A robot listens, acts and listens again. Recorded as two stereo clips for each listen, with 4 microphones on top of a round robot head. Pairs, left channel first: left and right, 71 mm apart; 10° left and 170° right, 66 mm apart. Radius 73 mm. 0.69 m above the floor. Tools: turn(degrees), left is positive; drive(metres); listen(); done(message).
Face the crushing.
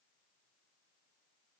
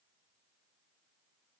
listen()
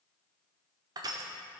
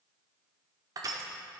turn(degrees=-130)
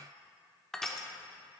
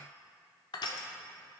done("Found it: crushing, straight ahead.")